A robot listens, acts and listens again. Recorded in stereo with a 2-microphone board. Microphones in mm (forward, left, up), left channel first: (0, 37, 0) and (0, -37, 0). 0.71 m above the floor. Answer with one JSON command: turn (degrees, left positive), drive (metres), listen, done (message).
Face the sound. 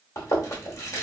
{"turn": 45}
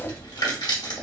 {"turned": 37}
{"turn": 95}
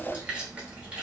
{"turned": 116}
{"turn": -20}
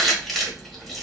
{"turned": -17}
{"done": "Found it: chewing, straight ahead, 1 to 2 m away."}